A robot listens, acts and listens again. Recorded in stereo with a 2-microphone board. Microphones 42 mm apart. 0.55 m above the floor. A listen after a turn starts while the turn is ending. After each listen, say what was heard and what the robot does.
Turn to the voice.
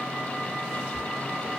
Keep listening.
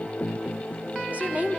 The woman speaking: about 40° right or 140° right. Turn 40° right.
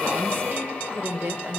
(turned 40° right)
So it is at 95° right. Turn 95° right.
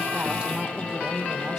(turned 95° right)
Keep listening.
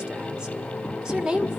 The woman speaking is now 20° right. Turn 20° right.
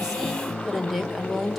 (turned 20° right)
Facing the woman speaking.